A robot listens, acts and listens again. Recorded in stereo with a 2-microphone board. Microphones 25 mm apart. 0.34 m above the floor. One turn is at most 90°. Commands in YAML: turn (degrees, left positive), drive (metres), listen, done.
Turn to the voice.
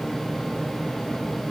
listen: true
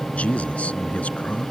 turn: 65
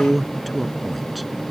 done: "Facing the man speaking."